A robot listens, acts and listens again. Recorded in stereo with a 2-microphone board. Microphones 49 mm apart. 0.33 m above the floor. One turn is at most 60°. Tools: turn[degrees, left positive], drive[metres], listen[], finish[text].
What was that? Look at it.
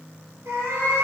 Thought: The cat meowing: about 55° right or 125° right.
Action: turn[-55]
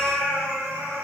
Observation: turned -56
Thought: So it is at 85° right.
Action: turn[-60]
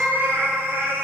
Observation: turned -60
Thought: The cat meowing is now 55° right.
Action: turn[-55]
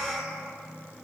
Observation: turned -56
Thought: The cat meowing is now 30° right.
Action: turn[-30]
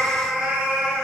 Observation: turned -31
Thought: The cat meowing is now 10° right.
Action: turn[-10]
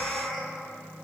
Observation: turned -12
Action: finish[Facing the cat meowing, 1 to 2 m away.]